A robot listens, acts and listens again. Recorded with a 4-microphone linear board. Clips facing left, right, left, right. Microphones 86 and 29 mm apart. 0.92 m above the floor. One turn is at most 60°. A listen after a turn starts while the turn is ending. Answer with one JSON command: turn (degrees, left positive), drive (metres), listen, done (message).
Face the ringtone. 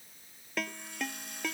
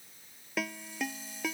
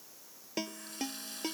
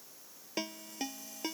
{"turn": -30}
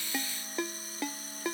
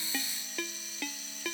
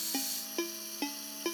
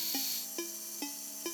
{"turn": 25}
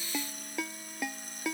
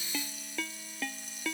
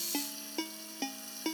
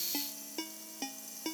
{"turn": 15}
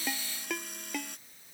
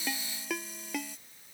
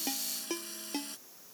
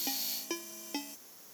{"done": "Found it: a ringtone, straight ahead."}